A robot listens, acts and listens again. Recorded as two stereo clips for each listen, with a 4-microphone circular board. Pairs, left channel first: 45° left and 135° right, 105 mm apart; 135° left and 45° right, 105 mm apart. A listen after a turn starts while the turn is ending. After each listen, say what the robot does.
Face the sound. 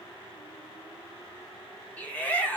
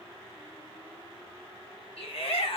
Turn 120° left.
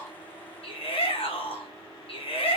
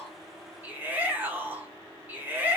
Turn 25° left.
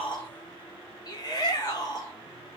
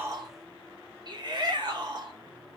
Found it: a shout, straight ahead, under 1 m away.